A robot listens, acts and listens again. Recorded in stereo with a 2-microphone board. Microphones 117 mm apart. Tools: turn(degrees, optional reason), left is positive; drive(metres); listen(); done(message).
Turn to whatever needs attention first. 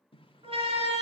turn(degrees=-60, reason="The siren: about 60° right or 120° right.")
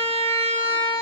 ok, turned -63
turn(degrees=-55, reason="So it is at 55° right.")
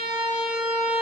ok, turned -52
done("Found it: a siren, straight ahead, 2 to 4 m away.")